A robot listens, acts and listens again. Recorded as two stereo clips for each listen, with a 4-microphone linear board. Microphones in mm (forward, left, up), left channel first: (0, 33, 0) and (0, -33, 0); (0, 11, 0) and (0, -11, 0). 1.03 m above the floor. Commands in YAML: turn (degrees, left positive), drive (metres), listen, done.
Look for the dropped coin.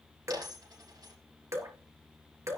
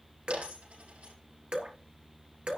turn: -90
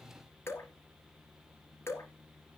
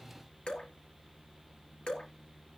done: "Facing where the dropped coin came from. I can't hear it now."